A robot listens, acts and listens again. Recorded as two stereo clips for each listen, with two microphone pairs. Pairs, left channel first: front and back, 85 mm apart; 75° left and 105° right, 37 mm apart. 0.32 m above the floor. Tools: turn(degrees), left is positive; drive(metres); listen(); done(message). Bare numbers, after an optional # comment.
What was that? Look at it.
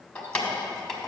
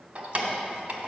# The keys jangling: 85° right.
turn(-85)
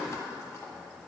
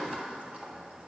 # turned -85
# The keys jangling is now 50° right.
turn(-50)
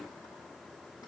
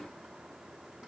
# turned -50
listen()
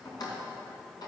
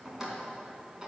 # The keys jangling is now 30° right.
turn(-30)
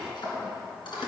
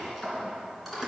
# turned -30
# The keys jangling is now 15° right.
turn(-15)
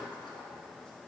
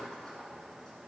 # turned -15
listen()
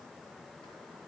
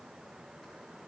listen()
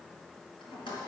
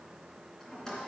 done("Found it: keys jangling, straight ahead.")